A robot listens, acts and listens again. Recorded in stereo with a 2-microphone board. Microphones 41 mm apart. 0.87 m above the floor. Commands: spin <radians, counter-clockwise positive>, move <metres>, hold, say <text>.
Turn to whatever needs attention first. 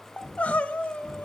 spin 0.61
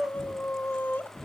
spin 1.75
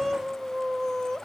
spin 0.26
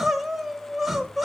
say Facing the crying.